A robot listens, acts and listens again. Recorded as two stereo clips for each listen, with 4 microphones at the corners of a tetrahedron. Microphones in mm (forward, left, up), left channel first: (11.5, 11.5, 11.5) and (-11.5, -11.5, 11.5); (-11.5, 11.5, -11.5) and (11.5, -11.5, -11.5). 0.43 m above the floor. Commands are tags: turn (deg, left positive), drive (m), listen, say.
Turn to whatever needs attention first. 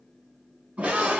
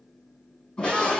<turn deg="-175"/>
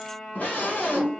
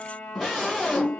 <turn deg="35"/>
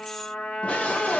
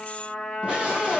<say>Facing the scream.</say>